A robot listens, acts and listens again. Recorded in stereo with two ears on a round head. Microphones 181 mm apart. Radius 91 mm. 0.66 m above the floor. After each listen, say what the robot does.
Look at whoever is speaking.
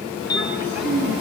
Turn 65° right.
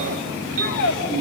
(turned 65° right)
Turn 55° right.
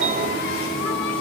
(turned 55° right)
Keep listening.
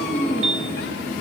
Facing the child speaking.